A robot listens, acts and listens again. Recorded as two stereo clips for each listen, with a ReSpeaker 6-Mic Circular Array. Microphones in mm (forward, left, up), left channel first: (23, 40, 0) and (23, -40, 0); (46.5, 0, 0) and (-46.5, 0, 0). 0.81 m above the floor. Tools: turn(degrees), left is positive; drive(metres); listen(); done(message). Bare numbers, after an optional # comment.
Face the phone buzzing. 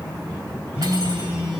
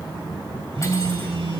# The phone buzzing: 170° right.
turn(-170)
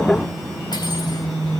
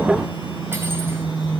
done("Found it: a phone buzzing, straight ahead.")